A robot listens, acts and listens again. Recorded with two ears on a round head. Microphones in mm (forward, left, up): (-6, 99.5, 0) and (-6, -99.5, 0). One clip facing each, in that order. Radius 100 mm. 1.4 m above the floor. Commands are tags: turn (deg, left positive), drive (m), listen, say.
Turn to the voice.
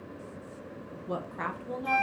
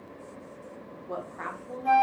<turn deg="50"/>
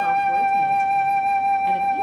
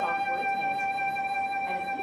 <listen/>
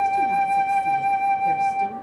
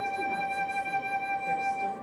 <listen/>
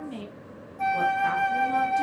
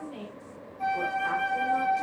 <turn deg="70"/>
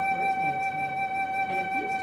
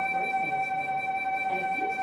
<listen/>
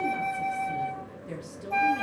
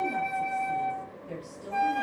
<turn deg="30"/>
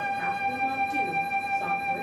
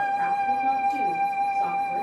<listen/>
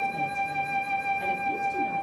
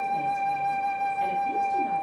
<listen/>
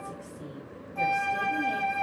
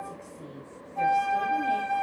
<say>Facing the woman speaking, 2 to 4 m away.</say>